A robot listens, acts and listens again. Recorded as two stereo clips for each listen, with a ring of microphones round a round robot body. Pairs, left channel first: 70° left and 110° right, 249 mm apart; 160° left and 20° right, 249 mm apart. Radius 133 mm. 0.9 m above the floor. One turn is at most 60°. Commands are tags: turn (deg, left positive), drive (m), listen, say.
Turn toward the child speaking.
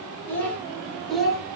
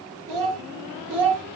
<turn deg="-25"/>
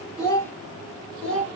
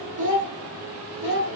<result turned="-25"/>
<turn deg="-20"/>
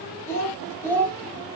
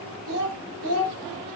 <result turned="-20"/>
<turn deg="-15"/>
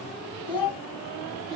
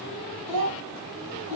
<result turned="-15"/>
<say>Facing the child speaking, 2 to 4 m away.</say>